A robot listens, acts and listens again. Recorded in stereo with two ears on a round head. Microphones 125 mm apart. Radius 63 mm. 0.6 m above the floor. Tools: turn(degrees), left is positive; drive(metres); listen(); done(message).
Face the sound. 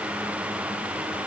listen()
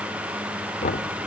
turn(degrees=50)
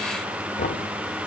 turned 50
turn(degrees=70)
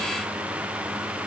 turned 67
listen()
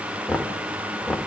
done("Facing the knocking, 1 to 2 m away.")